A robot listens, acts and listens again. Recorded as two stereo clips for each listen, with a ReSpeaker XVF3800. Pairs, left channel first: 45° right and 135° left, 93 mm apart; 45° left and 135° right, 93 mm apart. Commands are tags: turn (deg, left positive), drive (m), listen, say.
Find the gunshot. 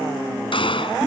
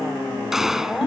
<turn deg="-50"/>
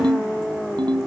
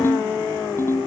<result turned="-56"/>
<say>I heard a gunshot from this way, but can't make it out now.</say>